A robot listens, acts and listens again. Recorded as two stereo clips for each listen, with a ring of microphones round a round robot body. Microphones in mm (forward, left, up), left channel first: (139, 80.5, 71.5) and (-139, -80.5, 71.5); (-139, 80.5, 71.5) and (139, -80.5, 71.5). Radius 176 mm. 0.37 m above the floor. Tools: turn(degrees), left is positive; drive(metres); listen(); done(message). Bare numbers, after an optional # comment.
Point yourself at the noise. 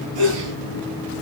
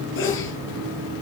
# The sneeze: 155° right.
turn(-155)
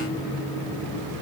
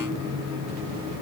done("Facing where the sneeze came from. I can't hear it now.")